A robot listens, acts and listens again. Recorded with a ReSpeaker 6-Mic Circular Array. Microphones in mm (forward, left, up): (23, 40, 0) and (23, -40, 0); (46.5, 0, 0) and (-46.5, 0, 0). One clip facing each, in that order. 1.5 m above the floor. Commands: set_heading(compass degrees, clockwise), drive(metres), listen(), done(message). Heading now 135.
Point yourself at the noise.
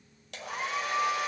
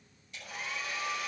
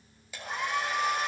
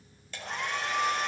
set_heading(55)
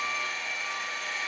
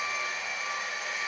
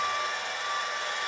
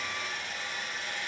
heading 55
set_heading(70)
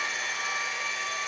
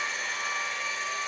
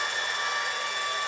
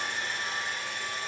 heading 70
done("Found it: a hair dryer, straight ahead, over 4 m away.")